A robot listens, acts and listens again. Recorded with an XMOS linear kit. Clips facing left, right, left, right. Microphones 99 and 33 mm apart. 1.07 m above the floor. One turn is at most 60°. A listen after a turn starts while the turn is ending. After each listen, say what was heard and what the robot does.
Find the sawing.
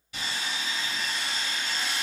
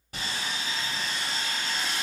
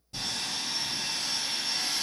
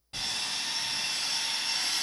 The sawing: about 45° right or 135° right. Turn 45° right.
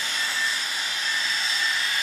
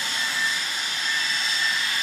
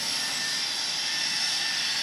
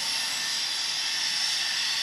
Found it: sawing, straight ahead.